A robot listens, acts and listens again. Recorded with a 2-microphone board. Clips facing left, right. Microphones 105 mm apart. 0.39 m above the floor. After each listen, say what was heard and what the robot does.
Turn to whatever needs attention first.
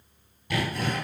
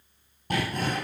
Keep listening.
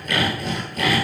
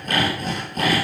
Keep listening.
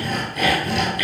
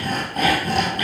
I can't make out anything urgent to turn to.